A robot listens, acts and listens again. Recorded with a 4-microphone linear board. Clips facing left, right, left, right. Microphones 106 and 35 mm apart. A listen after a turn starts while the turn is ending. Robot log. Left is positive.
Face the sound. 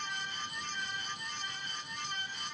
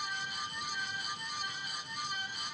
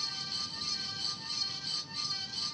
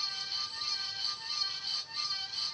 cmd idle
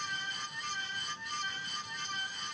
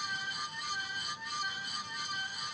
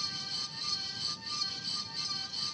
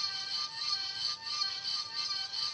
cmd idle
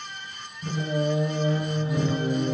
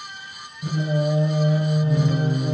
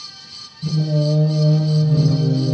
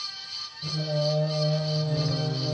note: The singing: about 30° right or 150° right.
cmd yaw -30
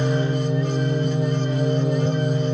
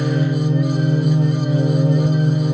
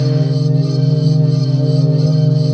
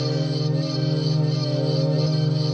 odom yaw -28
note: So it is at 125° right.
cmd yaw -125
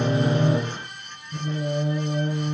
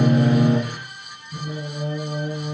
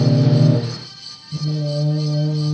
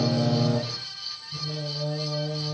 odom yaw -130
note: The singing is now 10° left.
cmd yaw +10
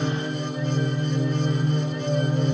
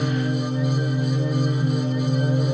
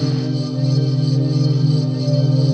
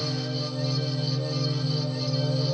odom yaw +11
end: Found it: singing, straight ahead.